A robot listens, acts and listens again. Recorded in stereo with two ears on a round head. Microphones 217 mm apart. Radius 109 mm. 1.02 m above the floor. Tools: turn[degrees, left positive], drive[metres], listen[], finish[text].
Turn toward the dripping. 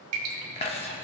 Thought: The dripping: about 70° right or 110° right.
Action: turn[-70]
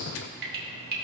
Thought: So it is at 40° right.
Action: turn[-40]
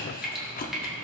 Action: finish[Facing the dripping, 1 to 2 m away.]